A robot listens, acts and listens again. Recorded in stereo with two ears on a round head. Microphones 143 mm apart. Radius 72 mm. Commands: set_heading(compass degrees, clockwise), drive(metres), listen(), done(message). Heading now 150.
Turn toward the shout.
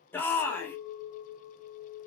set_heading(120)
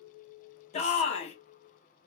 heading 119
set_heading(344)
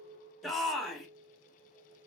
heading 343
done("Found it: a shout, straight ahead.")